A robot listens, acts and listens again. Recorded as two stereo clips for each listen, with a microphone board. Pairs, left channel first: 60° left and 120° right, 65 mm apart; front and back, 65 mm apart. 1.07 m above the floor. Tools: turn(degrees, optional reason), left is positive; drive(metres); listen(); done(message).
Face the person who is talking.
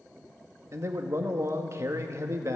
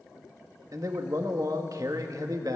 turn(degrees=-160, reason="The man speaking: 160° right.")
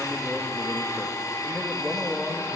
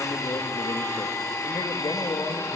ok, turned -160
turn(degrees=-25, reason="The man speaking is now 25° right.")
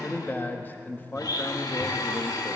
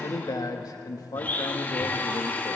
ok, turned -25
done("Facing the man speaking, 1 to 2 m away.")